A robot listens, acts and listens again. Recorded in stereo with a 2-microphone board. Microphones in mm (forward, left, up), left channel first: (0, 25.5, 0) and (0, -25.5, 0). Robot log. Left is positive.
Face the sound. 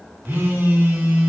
note: The phone buzzing: about 50° right or 130° right.
cmd yaw -50
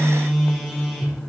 end: Facing the phone buzzing.